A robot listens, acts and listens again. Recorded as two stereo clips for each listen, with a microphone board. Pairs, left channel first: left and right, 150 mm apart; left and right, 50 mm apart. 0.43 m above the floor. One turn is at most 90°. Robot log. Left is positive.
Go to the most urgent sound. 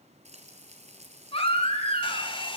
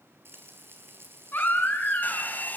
note: The baby crying: about 40° left or 140° left.
cmd yaw +40
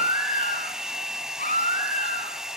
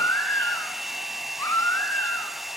note: So it is at 100° left.
cmd yaw +90
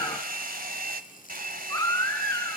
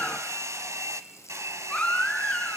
note: The baby crying is now 25° left.
cmd yaw +25
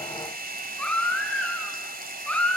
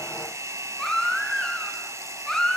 note: The baby crying is now 10° left.
cmd yaw +10
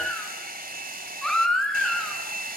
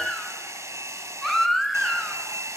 cmd fwd 1.0
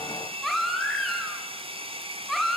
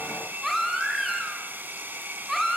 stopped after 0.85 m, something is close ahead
end: Something is in my way. I am facing the baby crying but have not reached it.